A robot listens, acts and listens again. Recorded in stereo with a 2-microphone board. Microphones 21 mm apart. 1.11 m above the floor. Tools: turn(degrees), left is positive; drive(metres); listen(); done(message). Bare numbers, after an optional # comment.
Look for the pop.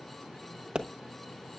# The pop: about 60° right or 120° right.
turn(-60)
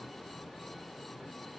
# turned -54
listen()
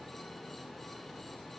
done("I heard a pop, but can't make it out now. It was about 5° right or 65° right.")